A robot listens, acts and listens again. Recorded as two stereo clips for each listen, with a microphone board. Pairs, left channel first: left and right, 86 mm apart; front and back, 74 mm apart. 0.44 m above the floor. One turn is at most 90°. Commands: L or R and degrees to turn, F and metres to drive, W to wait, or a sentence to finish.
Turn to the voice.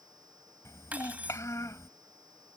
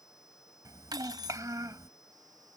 L90
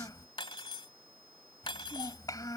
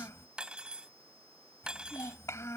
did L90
L45
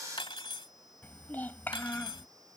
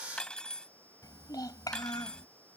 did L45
L25
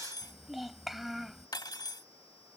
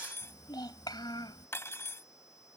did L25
Found it: a child speaking, straight ahead.